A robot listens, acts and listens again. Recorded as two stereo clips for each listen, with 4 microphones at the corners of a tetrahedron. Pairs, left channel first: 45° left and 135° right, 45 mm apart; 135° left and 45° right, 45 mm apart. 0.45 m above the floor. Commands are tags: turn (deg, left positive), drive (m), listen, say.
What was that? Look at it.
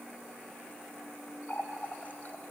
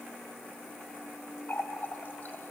<turn deg="90"/>
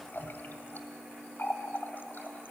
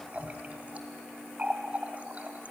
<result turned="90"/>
<turn deg="10"/>
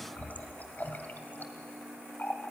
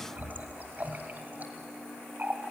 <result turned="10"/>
<say>Found it: a running tap, straight ahead, 1 to 2 m away.</say>